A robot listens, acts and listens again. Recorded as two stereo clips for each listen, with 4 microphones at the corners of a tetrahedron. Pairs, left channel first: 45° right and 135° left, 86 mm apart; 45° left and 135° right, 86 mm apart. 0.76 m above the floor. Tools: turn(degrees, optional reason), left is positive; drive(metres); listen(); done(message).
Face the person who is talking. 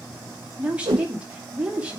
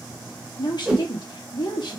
turn(degrees=60, reason="The woman speaking: 60° left.")
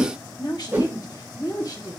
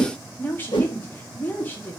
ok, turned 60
turn(degrees=-20, reason="The woman speaking is now 20° right.")
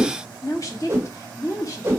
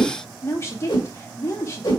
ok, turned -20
done("Facing the woman speaking.")